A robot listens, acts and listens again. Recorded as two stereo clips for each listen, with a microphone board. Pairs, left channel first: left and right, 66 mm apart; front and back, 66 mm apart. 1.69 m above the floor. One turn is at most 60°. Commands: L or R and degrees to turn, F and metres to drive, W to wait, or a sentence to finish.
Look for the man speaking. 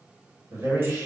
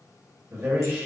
R60
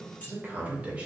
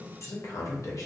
R20
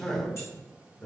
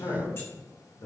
L25
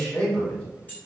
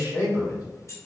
L20
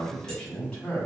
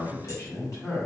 L20
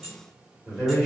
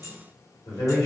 Facing the man speaking, 2 to 4 m away.